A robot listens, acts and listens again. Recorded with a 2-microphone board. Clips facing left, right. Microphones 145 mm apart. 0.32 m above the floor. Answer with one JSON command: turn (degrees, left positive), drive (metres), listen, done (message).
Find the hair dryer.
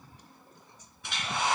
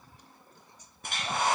{"turn": -45}
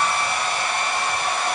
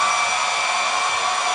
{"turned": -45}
{"turn": -85}
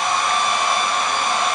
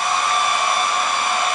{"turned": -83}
{"done": "Found it: a hair dryer, straight ahead."}